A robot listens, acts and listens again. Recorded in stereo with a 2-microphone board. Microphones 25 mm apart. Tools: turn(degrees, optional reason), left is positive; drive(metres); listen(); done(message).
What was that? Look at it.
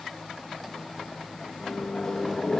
turn(degrees=20, reason="The microwave: about 20° left or 160° left.")
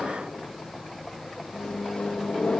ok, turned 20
turn(degrees=140, reason="So it is at 140° left.")
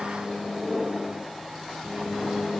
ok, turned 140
turn(degrees=-40, reason="The microwave is now 40° right.")
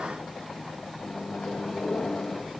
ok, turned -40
turn(degrees=25, reason="The microwave is now 25° left.")
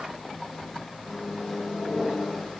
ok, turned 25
turn(degrees=10, reason="The microwave is now 10° left.")
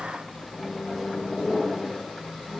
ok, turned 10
done("Found it: a microwave, straight ahead.")